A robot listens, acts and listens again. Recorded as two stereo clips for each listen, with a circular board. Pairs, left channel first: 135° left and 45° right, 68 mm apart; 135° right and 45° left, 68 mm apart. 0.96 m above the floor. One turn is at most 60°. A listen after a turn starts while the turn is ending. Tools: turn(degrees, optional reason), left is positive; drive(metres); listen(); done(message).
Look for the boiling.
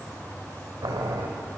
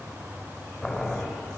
turn(degrees=-50, reason="The boiling: 50° right.")
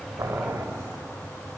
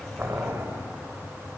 done("Facing the boiling.")